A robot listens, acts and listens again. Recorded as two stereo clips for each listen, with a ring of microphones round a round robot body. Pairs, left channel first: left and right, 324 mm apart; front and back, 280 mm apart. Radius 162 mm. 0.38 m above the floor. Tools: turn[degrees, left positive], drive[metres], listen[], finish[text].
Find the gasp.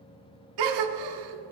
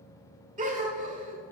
Thought: The gasp: 110° right.
Action: turn[-110]
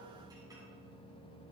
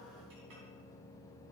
Action: finish[Facing where the gasp came from. I can't hear it now.]